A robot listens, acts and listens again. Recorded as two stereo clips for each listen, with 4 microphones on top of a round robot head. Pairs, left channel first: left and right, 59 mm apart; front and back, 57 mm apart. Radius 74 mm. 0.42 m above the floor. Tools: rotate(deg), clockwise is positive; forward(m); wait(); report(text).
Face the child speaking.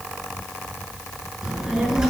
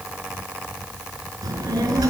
rotate(170)
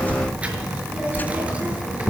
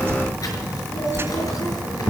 rotate(20)
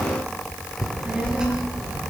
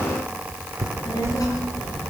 rotate(10)
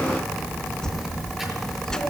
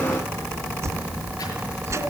report("Facing the child speaking.")